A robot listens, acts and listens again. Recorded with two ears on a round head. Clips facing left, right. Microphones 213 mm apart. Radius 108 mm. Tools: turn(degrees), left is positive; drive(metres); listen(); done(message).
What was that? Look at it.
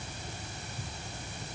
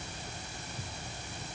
listen()
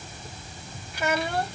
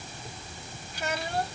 turn(degrees=60)
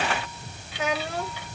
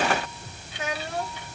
turn(degrees=60)
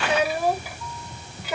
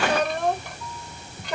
done("Found it: a child speaking, straight ahead.")